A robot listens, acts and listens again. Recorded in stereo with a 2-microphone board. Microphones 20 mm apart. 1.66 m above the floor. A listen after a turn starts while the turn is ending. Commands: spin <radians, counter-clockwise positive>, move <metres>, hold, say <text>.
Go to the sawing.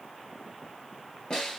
hold
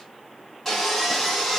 spin 0.52
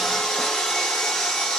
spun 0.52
spin 2.62
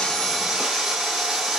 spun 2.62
spin -0.26
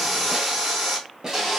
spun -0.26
move 1.0
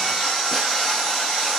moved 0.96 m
spin 0.17
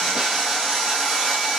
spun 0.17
move 1.0
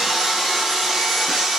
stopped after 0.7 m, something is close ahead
spin -0.17
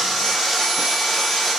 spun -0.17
say Arrived at the sawing, straight ahead.